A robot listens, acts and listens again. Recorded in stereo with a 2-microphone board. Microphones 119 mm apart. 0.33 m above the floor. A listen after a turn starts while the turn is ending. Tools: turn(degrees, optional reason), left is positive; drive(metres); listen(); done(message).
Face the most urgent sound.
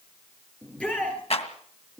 turn(degrees=30)
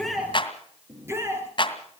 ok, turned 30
turn(degrees=-25, reason="So it is at 25° right.")
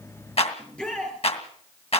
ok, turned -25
done("Found it: a shout, straight ahead.")